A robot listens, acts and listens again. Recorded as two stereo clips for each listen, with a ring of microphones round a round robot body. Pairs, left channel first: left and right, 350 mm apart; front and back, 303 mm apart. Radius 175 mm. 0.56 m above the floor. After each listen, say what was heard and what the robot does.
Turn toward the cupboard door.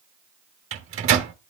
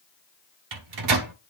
Keep listening.
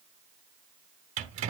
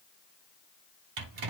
Keep listening.
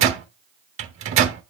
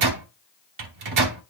I can't make out a cupboard door, only a microwave.